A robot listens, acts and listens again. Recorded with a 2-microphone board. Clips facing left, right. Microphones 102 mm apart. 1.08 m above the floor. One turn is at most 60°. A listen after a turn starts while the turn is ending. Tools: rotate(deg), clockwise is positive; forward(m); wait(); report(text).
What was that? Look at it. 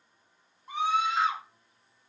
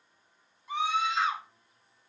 rotate(-40)
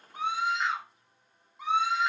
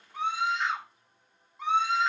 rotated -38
report("Facing the scream.")